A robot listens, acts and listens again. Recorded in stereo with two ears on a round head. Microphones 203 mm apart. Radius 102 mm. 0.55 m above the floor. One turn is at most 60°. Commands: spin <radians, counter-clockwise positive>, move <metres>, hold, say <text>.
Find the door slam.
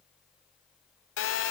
hold
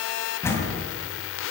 spin 0.52
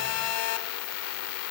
hold
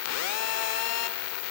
say I heard a door slam, but can't make it out now. It was about 20° right or 140° left.